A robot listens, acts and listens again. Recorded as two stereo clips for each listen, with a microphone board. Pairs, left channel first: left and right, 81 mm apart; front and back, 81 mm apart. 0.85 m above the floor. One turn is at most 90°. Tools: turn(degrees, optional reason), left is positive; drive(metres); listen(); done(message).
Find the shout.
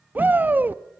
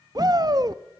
turn(degrees=-90, reason="The shout: 155° right.")
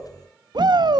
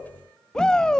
turn(degrees=-80, reason="The shout is now 80° right.")
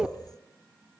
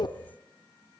turn(degrees=-10, reason="The shout is now 10° right.")
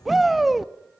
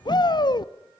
done("Found it: a shout, straight ahead, under 1 m away.")